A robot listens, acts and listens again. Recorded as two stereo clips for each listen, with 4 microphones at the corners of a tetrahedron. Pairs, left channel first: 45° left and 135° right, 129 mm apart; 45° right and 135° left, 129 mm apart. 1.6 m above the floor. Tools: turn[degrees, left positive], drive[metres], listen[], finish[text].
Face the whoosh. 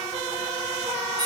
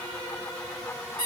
Action: listen[]
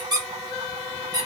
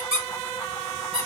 Action: listen[]
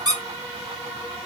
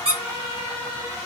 Action: finish[I can't make out a whoosh, only a squeak.]